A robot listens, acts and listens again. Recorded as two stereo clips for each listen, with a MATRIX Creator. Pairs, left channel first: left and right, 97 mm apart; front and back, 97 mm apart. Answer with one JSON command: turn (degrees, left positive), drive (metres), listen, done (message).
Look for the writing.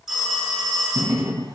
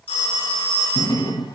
{"turn": -40}
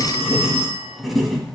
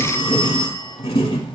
{"done": "Facing the writing."}